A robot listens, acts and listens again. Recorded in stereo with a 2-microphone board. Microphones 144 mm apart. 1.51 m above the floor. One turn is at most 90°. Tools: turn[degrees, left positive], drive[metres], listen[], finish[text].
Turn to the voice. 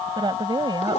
Thought: The woman speaking: about 30° right or 150° right.
Action: turn[-30]
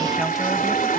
Action: listen[]
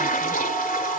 Action: listen[]
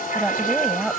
Action: finish[Found it: a woman speaking, straight ahead.]